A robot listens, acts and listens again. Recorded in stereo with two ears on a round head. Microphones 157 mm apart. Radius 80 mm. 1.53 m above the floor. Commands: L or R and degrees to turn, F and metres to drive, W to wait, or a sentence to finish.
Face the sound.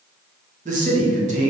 R40
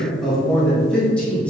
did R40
Facing the man speaking.